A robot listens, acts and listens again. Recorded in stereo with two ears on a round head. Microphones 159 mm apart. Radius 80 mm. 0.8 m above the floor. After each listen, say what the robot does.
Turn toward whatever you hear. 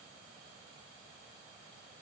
Keep listening.
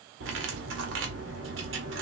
Turn 90° right.
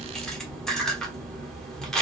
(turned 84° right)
Facing the cutlery clinking.